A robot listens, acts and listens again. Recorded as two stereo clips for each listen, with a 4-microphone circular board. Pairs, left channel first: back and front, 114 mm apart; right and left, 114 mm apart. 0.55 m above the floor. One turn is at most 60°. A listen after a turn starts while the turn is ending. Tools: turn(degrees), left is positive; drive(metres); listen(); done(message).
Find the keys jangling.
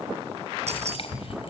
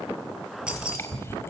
turn(degrees=10)
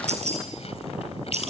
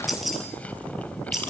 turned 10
done("Facing the keys jangling, over 4 m away.")